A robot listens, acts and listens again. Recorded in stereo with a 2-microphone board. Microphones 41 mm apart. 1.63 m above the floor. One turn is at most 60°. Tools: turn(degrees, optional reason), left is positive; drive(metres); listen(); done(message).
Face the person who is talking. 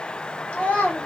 turn(degrees=35, reason="The child speaking: about 35° left or 145° left.")
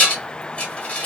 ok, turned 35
listen()
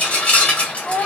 turn(degrees=60, reason="So it is at 105° left.")
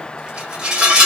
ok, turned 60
turn(degrees=45, reason="Nothing new. It was at 45° left.")
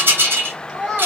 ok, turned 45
done("Found it: a child speaking, straight ahead.")